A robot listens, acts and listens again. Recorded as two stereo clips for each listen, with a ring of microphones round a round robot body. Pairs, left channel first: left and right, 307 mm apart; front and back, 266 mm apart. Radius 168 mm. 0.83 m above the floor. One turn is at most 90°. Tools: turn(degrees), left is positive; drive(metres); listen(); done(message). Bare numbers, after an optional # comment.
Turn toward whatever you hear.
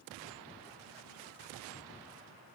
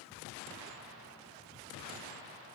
listen()
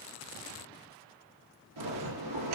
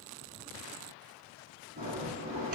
# The bell: 115° right.
turn(-90)
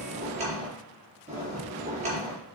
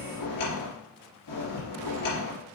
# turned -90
# The bell is now 20° right.
turn(-20)
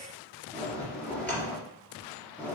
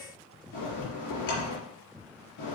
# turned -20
done("Found it: a bell, straight ahead.")